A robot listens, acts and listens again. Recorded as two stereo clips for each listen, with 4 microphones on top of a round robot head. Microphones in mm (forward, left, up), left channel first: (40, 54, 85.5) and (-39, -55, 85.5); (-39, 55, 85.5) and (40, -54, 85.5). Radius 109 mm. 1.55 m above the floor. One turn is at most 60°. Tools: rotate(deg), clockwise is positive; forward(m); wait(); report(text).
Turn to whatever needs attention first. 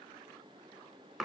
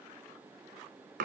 wait()
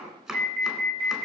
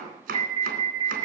rotate(60)
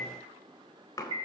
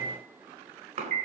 rotate(60)
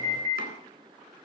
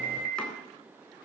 rotate(20)
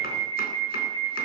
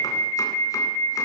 report("Facing the alarm, 2 to 4 m away.")